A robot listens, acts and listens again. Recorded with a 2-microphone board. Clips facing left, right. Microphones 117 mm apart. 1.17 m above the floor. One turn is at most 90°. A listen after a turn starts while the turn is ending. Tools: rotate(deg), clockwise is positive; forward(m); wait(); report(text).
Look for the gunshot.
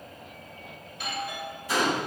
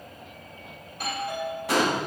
rotate(90)
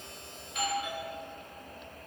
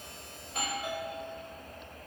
report("I heard a gunshot from this way, but can't make it out now.")